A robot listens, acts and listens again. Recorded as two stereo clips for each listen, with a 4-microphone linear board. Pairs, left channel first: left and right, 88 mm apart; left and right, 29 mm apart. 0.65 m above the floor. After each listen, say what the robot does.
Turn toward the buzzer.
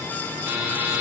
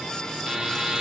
Turn 30° right.
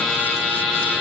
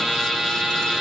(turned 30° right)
Facing the buzzer.